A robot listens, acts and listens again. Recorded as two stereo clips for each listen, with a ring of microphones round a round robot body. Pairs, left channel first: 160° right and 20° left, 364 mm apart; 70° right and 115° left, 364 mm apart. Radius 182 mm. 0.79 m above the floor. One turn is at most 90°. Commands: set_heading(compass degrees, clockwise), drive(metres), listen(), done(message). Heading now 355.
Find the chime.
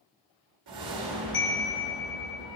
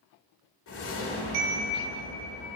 set_heading(265)
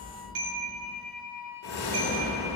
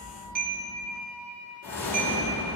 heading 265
set_heading(220)
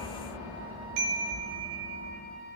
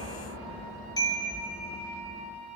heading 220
set_heading(210)
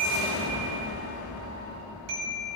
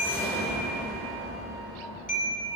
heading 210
done("Found it: a chime, straight ahead.")